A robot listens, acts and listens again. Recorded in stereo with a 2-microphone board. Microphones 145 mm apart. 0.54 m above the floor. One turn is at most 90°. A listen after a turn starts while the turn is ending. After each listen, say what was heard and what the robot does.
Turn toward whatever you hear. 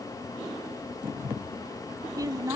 The woman speaking: about 20° right or 160° right. Turn 20° right.
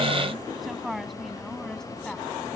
Found it: a woman speaking, straight ahead.